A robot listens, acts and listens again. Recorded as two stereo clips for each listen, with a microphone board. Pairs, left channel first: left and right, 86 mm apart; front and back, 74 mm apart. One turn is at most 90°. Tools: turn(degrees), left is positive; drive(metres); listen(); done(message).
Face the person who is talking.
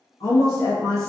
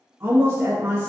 turn(degrees=90)
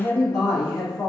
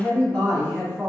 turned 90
turn(degrees=70)
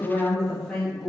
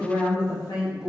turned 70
done("Facing the woman speaking, 1 to 2 m away.")